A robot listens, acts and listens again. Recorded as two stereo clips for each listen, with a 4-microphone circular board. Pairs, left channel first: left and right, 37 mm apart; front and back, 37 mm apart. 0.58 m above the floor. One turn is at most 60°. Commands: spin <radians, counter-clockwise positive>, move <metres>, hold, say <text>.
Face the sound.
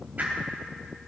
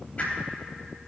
spin -0.79
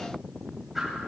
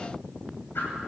say Found it: a whoosh, straight ahead, 2 to 4 m away.